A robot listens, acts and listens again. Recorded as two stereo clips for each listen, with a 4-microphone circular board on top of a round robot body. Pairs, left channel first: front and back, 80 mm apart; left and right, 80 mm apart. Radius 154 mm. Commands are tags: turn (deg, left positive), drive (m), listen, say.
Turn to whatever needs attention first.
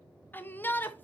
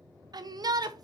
<turn deg="-65"/>
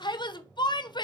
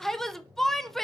<say>Facing the shout.</say>